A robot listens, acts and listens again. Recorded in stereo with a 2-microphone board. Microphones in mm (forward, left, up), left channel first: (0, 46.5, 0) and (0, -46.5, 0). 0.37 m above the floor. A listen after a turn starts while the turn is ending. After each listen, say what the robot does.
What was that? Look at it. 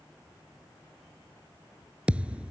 Turn 30° right.
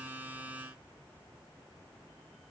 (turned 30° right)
Keep listening.
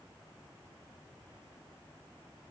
I heard a thud, but can't make it out now. It was about 15° left or 135° right.